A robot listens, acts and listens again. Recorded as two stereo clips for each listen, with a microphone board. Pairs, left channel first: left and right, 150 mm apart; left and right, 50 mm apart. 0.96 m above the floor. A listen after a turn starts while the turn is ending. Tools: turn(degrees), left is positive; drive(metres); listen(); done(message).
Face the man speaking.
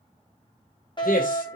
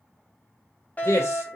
turn(degrees=65)
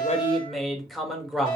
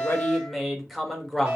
done("Found it: a man speaking, straight ahead.")